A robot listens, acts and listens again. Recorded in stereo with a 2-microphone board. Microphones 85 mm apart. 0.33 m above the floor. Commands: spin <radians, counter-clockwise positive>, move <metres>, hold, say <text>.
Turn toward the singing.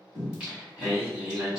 spin -0.52
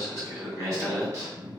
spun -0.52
spin -2.44
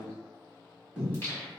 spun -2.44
spin 0.52
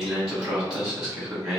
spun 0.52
say Found it: singing, straight ahead.